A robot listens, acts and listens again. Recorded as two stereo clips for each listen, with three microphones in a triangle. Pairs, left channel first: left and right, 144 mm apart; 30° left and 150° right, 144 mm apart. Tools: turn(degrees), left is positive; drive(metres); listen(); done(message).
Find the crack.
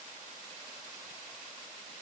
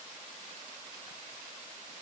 listen()
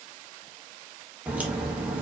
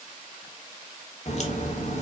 turn(degrees=-10)
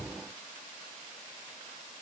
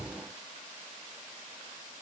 done("Facing where the crack came from. I can't hear it now.")